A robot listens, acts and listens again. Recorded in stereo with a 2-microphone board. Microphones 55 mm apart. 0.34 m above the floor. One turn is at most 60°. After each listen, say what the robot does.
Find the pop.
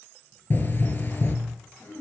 Turn 40° left.
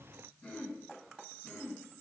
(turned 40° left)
Keep listening.
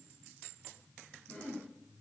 I heard a pop, but can't make it out now. It was about straight ahead or 100° left.